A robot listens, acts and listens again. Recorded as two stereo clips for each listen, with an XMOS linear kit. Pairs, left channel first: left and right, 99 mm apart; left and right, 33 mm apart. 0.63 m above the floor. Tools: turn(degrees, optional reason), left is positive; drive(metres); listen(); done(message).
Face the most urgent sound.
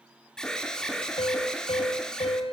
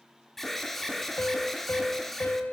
turn(degrees=30)
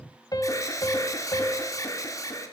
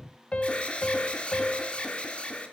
turn(degrees=145, reason="So it is at 145° left.")
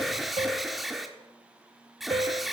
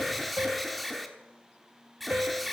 done("Found it: an alarm, straight ahead, 1 to 2 m away.")